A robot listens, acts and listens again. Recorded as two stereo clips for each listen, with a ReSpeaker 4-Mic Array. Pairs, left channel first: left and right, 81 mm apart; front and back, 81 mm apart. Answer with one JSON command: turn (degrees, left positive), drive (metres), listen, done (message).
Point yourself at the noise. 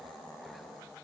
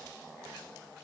{"listen": true}
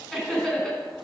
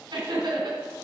{"turn": 170}
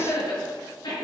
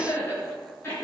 {"turn": 60}
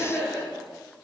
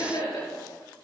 {"done": "Found it: laughter, straight ahead."}